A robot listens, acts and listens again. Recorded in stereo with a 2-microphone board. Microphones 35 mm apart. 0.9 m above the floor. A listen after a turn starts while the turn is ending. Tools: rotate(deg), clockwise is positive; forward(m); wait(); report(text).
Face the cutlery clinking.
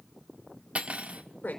rotate(40)
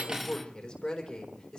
wait()
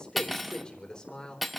report("Found it: cutlery clinking, straight ahead, under 1 m away.")